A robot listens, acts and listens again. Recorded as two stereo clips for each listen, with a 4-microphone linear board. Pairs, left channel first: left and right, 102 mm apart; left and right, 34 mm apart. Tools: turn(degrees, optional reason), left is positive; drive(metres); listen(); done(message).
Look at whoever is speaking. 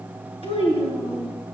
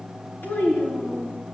turn(degrees=70, reason="The child speaking: about 70° left or 110° left.")
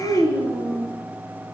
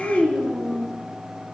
turn(degrees=35, reason="So it is at 35° left.")
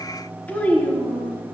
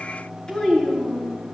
turn(degrees=15, reason="The child speaking is now 15° left.")
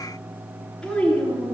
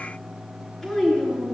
done("Facing the child speaking.")